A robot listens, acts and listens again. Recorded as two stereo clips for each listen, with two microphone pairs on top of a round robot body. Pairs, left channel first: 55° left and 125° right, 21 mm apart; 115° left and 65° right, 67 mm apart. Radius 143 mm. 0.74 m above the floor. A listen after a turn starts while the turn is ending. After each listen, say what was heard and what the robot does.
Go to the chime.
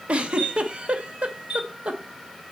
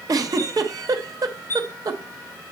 The chime: 175° left. Turn 175° left.
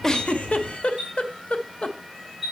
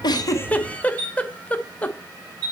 The chime is now 45° right. Turn 45° right.
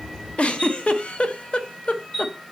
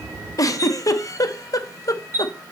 The chime is now 10° right. Turn 10° right.
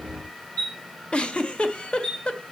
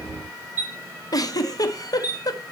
Drive 1.0 m forward.
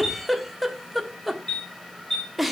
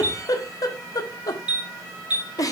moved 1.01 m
Drive 1.0 m forward.
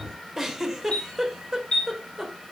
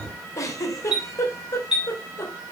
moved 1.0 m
The chime is now 10° left. Turn 10° left.
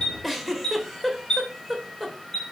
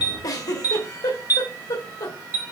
Drive 1.0 m forward.
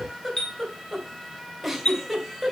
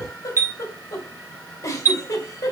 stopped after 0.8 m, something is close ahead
I am next to the chime.